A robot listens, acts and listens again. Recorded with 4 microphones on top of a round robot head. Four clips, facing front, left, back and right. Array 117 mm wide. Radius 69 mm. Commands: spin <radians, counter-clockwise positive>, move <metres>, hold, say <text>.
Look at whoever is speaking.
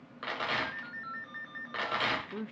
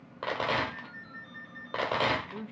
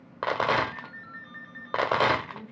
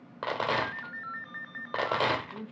say Facing the man speaking, 1 to 2 m away.